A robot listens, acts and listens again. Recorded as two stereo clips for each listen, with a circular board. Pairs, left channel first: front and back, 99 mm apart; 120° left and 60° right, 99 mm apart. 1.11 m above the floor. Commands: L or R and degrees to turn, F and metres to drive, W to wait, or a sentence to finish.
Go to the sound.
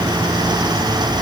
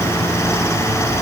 W
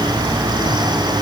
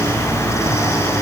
W
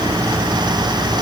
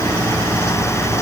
I can't make out anything.